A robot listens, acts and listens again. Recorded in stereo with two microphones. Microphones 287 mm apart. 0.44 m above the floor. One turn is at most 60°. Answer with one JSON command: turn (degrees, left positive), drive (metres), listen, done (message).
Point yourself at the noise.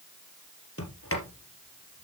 {"turn": 50}
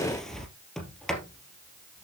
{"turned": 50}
{"done": "Facing the sliding door, 2 to 4 m away."}